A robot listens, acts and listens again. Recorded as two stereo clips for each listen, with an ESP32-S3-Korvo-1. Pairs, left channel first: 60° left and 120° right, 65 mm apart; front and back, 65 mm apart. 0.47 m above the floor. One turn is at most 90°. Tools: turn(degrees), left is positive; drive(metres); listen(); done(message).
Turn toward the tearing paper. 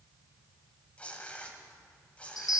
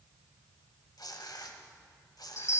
turn(degrees=-10)
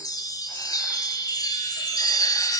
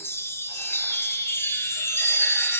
listen()
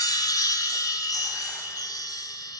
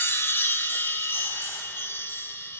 listen()
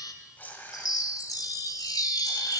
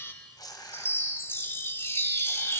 done("Facing the tearing paper.")